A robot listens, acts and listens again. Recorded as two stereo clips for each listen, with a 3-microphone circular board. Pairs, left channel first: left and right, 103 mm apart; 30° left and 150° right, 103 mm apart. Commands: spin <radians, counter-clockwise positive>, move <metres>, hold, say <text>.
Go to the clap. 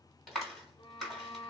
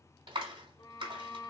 spin 3.14
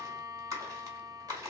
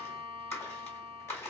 spin -0.61
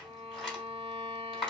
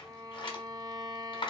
move 1.0
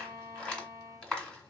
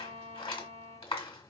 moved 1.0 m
spin 0.17
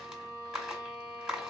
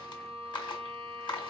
move 1.0
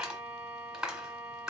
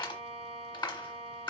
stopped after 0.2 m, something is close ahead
say Arrived at the clap, straight ahead.